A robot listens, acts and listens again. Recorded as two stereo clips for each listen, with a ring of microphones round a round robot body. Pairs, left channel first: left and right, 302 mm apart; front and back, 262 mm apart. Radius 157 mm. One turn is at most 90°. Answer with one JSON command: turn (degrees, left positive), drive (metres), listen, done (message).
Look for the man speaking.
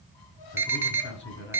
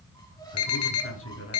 {"turn": 35}
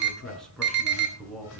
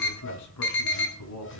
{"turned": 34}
{"done": "Found it: a man speaking, straight ahead."}